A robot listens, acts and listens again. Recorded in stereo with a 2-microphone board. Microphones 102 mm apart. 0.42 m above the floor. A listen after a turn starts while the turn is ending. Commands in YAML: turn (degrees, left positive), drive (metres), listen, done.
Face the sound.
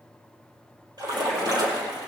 turn: -45
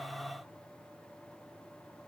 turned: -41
listen: true
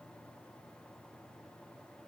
done: "I heard a splash, but can't make it out now. It was about straight ahead or 95° right."